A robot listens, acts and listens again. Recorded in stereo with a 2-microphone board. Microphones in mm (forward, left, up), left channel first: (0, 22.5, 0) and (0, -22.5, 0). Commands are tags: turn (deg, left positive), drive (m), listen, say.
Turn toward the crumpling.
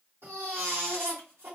<listen/>
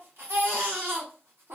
<listen/>
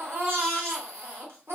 <say>I can't make out crumpling to turn to.</say>